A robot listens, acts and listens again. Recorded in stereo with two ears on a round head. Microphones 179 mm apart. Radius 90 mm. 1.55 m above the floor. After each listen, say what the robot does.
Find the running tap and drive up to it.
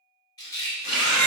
Turn 60° left.
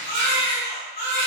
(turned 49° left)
Keep listening.
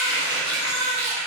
Turn 65° left.
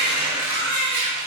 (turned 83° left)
Turn 15° right.
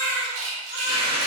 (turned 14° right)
Drive 1.0 m forward.
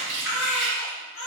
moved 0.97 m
Keep listening.
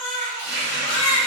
Turn 10° right.
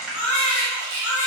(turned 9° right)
Drive 1.0 m forward.
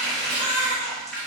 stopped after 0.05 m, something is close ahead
I am next to the running tap.